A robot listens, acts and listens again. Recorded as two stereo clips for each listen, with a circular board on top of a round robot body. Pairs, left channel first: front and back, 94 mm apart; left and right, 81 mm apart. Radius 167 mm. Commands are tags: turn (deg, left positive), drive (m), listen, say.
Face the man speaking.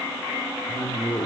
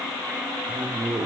<turn deg="-55"/>
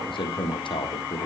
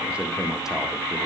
<say>Found it: a man speaking, straight ahead, 1 to 2 m away.</say>